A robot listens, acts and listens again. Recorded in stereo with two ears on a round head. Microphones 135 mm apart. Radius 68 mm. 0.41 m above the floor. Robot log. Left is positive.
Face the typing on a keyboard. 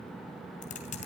note: The typing on a keyboard: about 50° left or 130° left.
cmd yaw +50
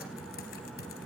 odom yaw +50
cmd idle
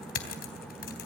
note: So it is at 75° left.
cmd yaw +75
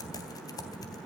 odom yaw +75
note: The typing on a keyboard is now 25° left.
cmd yaw +25
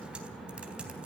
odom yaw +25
end: Facing the typing on a keyboard.